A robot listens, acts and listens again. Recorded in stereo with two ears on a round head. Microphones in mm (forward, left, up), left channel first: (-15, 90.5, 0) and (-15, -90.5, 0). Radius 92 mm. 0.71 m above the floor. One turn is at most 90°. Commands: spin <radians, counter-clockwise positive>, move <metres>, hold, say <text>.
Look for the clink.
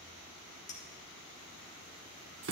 spin 0.61
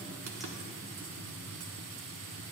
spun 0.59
hold
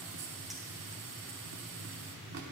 hold
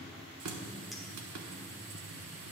say I heard a clink, but can't make it out now. It was about straight ahead or 110° left.